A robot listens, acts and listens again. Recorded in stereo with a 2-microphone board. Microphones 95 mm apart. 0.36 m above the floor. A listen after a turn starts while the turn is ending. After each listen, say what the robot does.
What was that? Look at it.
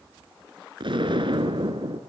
Turn 60° right.
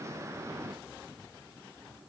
Keep listening.
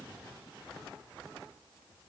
I heard an explosion, but can't make it out now. It was about straight ahead or 60° right.